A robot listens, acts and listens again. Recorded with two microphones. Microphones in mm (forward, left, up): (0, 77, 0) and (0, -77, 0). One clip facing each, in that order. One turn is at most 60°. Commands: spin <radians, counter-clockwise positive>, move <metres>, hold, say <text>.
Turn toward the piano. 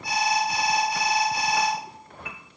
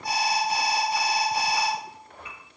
spin 1.05
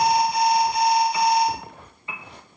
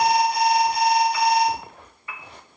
spin 0.44
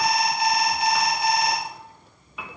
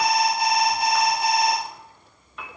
say Facing the piano, under 1 m away.